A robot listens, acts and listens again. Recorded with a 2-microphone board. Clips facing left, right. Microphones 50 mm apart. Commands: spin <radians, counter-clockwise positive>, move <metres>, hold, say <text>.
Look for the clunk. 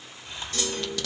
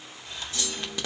spin 1.22
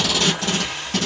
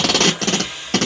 hold
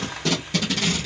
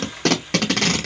say I heard a clunk, but can't make it out now. It was about straight ahead or 40° left.